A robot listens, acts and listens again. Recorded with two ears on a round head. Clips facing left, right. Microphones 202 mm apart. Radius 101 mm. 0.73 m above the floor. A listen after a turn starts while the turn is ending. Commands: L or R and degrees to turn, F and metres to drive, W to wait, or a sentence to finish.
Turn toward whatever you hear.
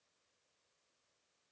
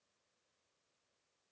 W
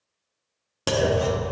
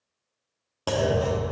L30
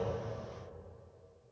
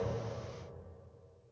W
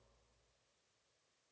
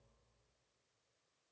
I heard a clunk, but can't make it out now. It was about straight ahead or 120° left.